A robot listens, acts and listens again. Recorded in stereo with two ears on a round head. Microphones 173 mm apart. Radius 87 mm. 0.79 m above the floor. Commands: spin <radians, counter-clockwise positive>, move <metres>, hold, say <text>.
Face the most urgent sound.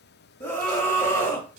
spin 0.52
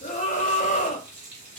spin 2.44
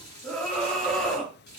say Facing the scream.